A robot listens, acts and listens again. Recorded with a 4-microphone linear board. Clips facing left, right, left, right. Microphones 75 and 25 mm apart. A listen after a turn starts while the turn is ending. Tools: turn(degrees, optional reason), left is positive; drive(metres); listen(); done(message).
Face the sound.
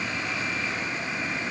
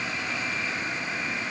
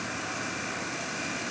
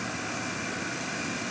listen()
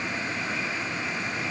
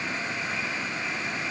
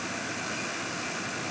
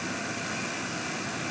listen()
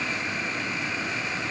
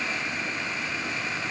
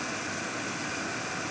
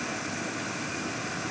done("I can't make out anything.")